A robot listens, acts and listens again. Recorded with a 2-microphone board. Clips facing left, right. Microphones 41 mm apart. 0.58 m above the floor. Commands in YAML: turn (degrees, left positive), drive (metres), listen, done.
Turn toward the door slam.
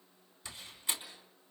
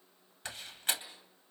turn: -60
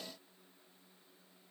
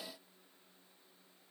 listen: true
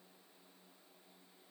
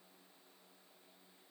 done: "I heard a door slam, but can't make it out now. It was about straight ahead or 60° right."